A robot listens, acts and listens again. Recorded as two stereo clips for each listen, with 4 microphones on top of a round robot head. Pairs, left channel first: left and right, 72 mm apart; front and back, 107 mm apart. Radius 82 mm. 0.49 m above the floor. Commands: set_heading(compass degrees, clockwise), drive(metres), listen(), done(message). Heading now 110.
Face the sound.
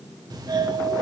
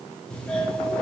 set_heading(190)
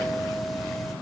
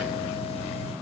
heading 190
done("Facing the doorbell, 2 to 4 m away.")